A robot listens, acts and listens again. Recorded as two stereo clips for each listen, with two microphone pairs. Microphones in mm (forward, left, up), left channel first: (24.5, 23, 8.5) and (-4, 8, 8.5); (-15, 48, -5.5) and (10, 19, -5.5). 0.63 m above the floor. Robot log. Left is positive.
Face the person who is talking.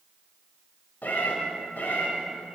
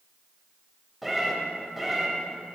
cmd idle
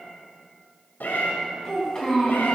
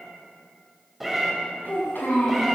note: The child speaking: 100° left.
cmd yaw +100
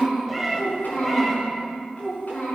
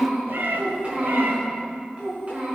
end: Facing the child speaking, over 4 m away.